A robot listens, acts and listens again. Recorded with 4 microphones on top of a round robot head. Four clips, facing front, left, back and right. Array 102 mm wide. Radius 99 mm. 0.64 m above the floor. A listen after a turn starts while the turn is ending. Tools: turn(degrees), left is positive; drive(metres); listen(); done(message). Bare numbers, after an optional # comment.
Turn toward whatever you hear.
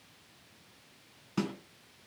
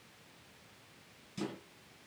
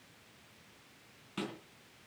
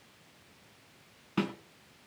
# The snare drum: 70° right.
turn(-70)
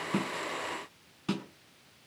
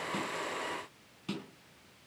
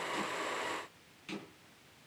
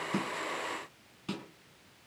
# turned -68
done("Found it: a snare drum, straight ahead.")